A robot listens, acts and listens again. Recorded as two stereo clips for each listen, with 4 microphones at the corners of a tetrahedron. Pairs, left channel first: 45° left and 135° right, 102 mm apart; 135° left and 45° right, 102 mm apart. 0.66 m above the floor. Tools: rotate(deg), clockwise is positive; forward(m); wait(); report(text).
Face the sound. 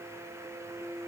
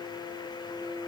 wait()
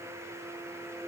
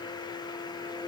wait()
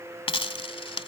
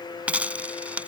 rotate(-30)
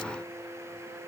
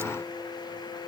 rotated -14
rotate(-15)
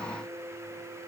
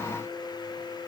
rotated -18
report("Facing where the dropped coin came from. I can't hear it now.")